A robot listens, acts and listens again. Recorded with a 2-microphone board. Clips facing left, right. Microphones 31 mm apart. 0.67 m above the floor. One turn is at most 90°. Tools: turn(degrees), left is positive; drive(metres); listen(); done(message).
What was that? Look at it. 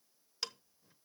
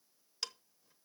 turn(degrees=30)
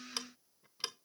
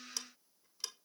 turn(degrees=90)
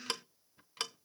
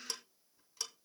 turn(degrees=50)
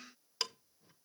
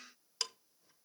turn(degrees=15)
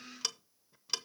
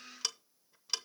done("Facing the ticking.")